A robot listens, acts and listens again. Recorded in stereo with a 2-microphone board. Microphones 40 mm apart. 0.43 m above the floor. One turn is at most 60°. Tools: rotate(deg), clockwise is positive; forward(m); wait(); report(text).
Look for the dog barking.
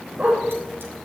rotate(30)
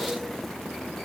wait()
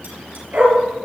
rotate(45)
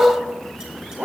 rotate(60)
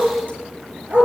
rotate(55)
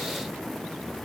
wait()
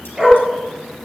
rotate(20)
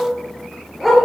report("Found it: a dog barking, straight ahead, 2 to 4 m away.")